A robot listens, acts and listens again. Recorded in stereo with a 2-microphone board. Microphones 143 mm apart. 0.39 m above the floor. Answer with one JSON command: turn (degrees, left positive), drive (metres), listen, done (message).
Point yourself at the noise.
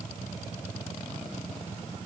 {"listen": true}
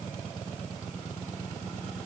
{"listen": true}
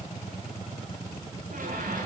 {"turn": -70}
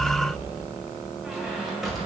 {"done": "Facing the squeak."}